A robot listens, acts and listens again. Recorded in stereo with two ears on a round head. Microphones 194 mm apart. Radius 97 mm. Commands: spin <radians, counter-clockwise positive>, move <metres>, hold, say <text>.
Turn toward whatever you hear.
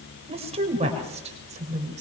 spin -0.61
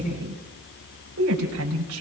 spin -1.92
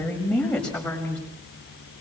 say Facing the woman speaking.